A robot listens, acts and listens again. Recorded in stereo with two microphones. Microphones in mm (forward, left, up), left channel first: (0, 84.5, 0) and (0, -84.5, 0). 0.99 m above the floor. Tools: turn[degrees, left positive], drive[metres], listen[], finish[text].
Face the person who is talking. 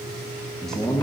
Action: turn[30]
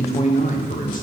Thought: So it is at 125° left.
Action: turn[125]
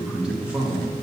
Thought: The man speaking is now 10° right.
Action: turn[-10]
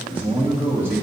Thought: The man speaking is now 15° right.
Action: turn[-15]
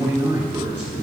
Action: finish[Facing the man speaking, 2 to 4 m away.]